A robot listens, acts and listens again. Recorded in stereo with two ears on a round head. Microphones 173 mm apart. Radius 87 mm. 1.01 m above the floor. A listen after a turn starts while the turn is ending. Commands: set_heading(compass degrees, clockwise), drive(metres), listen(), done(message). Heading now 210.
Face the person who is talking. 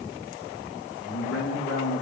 set_heading(140)
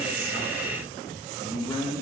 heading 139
set_heading(119)
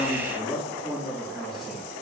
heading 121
done("Found it: a man speaking, straight ahead.")